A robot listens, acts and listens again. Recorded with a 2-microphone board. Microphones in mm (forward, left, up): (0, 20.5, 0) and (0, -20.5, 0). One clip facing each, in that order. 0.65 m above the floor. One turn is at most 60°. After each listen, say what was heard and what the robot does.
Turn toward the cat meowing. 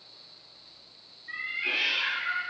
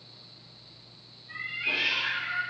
The cat meowing: about 55° left or 125° left. Turn 55° left.
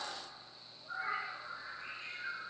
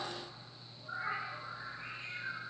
So it is at 40° right. Turn 40° right.
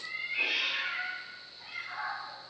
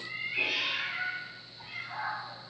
The cat meowing is now 20° right. Turn 20° right.
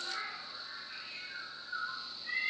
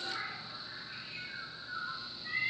Found it: a cat meowing, straight ahead.